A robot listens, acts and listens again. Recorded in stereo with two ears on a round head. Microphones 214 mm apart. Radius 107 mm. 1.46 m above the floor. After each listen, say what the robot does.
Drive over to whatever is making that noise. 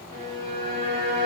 Turn 90° right.
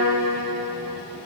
Turn 15° right.
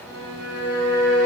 Drive 1.0 m forward.
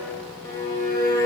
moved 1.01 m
Turn 10° left.
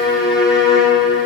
Drive 1.0 m forward.
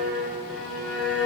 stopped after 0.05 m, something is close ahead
Arrived at the violin, straight ahead.